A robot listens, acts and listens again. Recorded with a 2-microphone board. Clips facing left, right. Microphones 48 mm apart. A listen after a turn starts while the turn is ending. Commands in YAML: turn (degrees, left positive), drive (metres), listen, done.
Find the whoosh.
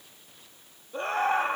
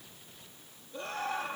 listen: true
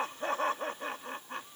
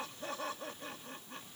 listen: true
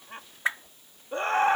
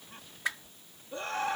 turn: 30
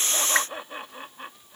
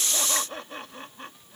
listen: true
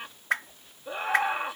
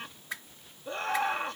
turn: 115
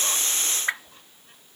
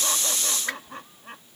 turn: 20
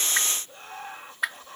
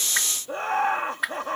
done: "Facing the whoosh."